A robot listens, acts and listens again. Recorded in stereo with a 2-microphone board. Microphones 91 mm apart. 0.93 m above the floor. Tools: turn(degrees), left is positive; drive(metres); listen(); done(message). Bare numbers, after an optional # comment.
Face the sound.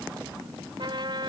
# The trumpet: about 55° right or 125° right.
turn(-55)
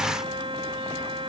# So it is at 75° right.
turn(-75)
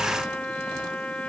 # The trumpet is now 10° left.
turn(10)
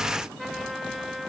done("Found it: a trumpet, straight ahead.")